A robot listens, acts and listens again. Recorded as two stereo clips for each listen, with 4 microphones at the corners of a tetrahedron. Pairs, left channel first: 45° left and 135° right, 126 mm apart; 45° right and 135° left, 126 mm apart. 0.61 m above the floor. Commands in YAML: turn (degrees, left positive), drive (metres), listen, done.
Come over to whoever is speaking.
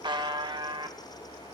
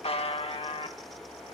listen: true
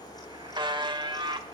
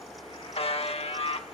listen: true
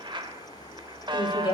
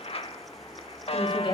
drive: 1.0
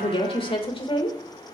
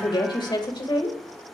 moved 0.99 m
drive: 1.0
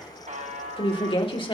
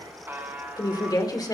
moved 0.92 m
turn: 10
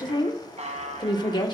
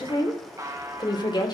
drive: 1.0
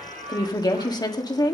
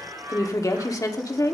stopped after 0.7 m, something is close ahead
done: "I am next to the woman speaking."